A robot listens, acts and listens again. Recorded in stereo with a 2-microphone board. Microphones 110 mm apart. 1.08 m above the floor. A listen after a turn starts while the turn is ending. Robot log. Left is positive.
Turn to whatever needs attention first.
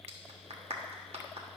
cmd idle
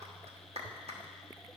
cmd idle
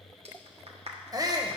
note: The shout: about 35° right or 145° right.
cmd yaw -35
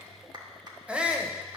note: So it is at 15° right.
cmd yaw -15
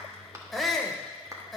end: Facing the shout, under 1 m away.